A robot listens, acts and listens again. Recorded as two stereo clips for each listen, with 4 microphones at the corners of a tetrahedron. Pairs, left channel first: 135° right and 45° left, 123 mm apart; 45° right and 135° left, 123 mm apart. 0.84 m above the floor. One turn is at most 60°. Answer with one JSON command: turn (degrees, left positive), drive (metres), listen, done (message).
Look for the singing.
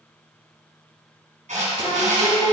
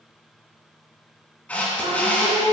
{"turn": -60}
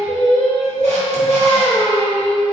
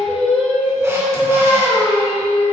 {"turn": -60}
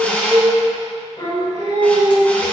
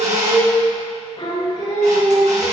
{"turn": -60}
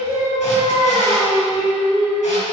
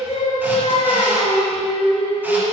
{"turn": -25}
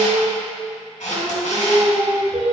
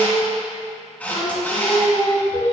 {"done": "Facing the singing, over 4 m away."}